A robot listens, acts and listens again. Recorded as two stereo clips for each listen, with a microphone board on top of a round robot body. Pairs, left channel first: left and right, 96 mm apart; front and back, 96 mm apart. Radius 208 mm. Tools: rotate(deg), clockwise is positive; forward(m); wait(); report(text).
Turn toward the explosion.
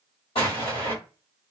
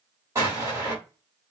rotate(-120)
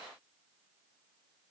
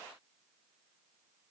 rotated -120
report("Facing where the explosion came from. I can't hear it now.")